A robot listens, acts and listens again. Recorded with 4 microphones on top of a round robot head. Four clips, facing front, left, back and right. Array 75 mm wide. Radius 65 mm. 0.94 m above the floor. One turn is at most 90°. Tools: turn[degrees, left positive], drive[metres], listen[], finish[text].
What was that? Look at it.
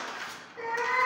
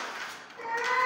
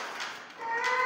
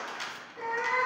Thought: The cat meowing: 20° right.
Action: turn[-20]
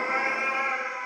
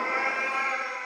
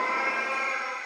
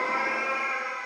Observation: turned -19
Thought: The cat meowing is now 15° left.
Action: turn[15]
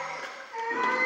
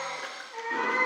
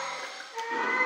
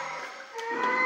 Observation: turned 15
Action: finish[Found it: a cat meowing, straight ahead, 2 to 4 m away.]